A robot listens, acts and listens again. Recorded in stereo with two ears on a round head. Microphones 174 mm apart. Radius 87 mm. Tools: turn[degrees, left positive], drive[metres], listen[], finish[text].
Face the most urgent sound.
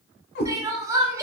Thought: The crying: about 15° right or 165° right.
Action: turn[-15]
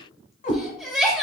Action: finish[Facing the crying.]